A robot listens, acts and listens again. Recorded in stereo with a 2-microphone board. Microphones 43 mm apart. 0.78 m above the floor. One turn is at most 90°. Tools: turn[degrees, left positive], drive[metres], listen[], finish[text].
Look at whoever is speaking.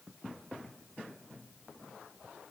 Action: listen[]
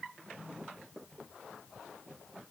Action: listen[]
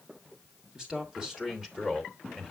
Action: turn[-30]
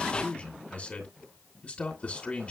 Thought: So it is at 30° left.
Action: turn[30]
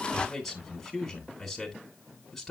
Action: finish[Found it: a man speaking, straight ahead.]